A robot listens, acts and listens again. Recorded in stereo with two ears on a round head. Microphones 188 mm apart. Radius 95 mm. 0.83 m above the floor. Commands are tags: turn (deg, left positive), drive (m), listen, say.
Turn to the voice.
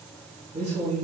<turn deg="-30"/>
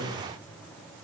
<say>Found it: a man speaking, straight ahead, 2 to 4 m away.</say>